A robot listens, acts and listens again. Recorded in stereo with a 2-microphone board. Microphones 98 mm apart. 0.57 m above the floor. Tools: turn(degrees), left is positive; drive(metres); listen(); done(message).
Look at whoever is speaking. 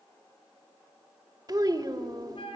turn(degrees=-40)
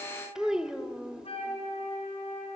done("Found it: a child speaking, straight ahead.")